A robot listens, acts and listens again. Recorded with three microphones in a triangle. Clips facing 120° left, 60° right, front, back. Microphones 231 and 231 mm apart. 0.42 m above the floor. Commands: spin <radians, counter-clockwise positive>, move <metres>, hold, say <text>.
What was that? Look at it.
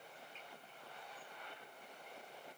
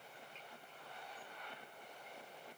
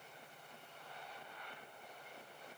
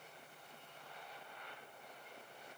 hold
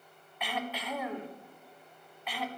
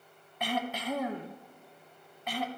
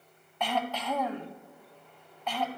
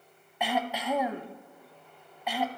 spin -1.75
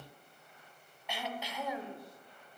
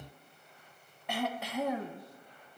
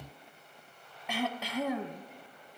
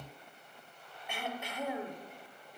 spin -0.35
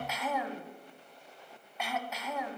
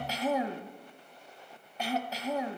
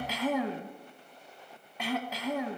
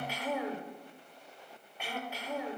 say Facing the throat clearing, under 1 m away.